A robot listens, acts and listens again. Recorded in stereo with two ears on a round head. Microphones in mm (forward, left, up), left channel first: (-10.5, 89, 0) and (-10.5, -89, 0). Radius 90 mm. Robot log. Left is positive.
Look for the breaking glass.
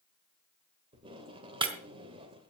note: The breaking glass: about 25° right or 155° right.
cmd yaw -25
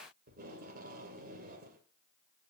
cmd idle
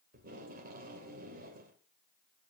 end: I heard breaking glass, but can't make it out now. It was about straight ahead or 130° right.